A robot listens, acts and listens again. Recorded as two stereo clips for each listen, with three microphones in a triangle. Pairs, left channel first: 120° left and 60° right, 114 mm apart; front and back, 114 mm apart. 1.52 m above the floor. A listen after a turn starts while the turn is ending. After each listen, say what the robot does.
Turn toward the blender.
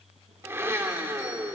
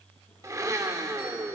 Turn 125° right.
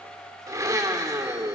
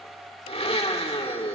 Facing the blender.